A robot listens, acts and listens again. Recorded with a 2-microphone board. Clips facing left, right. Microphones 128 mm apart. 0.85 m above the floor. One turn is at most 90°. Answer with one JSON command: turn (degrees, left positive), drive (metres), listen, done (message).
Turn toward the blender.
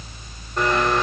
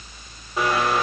{"turn": -30}
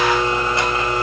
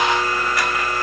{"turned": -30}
{"turn": 25}
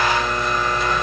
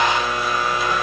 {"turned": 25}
{"done": "Found it: a blender, straight ahead, 2 to 4 m away."}